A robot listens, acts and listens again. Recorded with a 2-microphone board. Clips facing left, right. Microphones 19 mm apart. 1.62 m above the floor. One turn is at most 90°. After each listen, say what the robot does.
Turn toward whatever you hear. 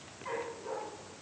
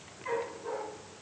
Turn 30° right.
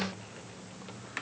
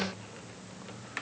Keep listening.
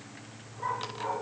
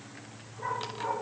Facing the dog barking.